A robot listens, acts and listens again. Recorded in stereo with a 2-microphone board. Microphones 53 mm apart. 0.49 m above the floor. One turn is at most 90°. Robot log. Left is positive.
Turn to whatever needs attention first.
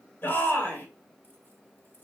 note: The shout: about 40° left or 140° left.
cmd yaw +40
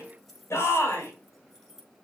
note: So it is at 95° left.
cmd yaw +90
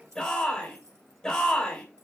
note: The shout is now 15° left.
cmd yaw +15
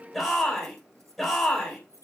end: Facing the shout.